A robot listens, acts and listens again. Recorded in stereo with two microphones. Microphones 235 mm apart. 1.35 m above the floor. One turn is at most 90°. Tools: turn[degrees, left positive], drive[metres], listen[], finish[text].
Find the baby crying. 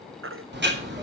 Thought: The baby crying: about 65° right or 115° right.
Action: turn[-65]
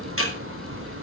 Action: listen[]
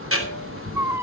Thought: So it is at 10° right.
Action: turn[-10]
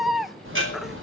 Action: finish[Facing the baby crying, under 1 m away.]